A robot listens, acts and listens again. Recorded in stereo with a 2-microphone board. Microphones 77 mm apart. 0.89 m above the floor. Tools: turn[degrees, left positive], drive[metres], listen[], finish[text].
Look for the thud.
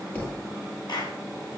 Thought: The thud: about 25° left or 155° left.
Action: turn[25]
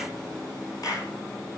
Action: listen[]
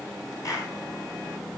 Action: finish[I heard a thud, but can't make it out now. It was about straight ahead or 130° left.]